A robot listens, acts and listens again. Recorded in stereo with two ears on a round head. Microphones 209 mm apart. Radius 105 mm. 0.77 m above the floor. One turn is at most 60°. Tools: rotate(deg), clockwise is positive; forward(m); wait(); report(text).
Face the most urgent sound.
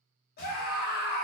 rotate(-45)
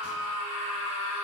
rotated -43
rotate(-60)
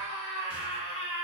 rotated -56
rotate(-30)
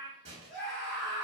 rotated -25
report("Facing the scream, under 1 m away.")